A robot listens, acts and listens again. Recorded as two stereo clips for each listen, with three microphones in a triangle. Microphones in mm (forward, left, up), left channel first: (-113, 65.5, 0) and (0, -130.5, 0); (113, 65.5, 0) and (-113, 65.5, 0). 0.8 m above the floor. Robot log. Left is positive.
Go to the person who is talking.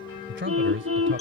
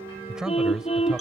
note: The man speaking: 95° right.
cmd yaw -95
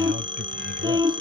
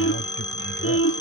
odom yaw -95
cmd idle
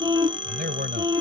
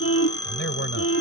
note: The man speaking is now 20° right.
cmd yaw -20
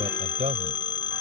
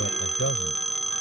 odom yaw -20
cmd fwd 1.0
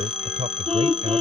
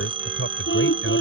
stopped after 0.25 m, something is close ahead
end: Something is in my way. I am facing the man speaking but have not reached it.